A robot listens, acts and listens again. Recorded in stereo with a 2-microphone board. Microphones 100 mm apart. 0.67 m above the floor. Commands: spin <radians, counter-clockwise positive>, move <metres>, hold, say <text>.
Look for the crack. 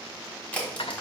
spin 0.35
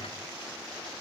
hold
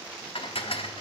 say I heard a crack, but can't make it out now. It was about straight ahead or 140° left.